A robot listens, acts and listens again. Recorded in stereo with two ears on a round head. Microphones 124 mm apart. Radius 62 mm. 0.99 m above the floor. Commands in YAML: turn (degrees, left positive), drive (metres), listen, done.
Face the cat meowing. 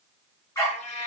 turn: 50
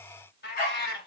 turn: 85
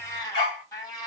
turn: 25
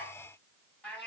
turn: 10
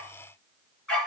listen: true
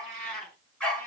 done: "Found it: a cat meowing, straight ahead."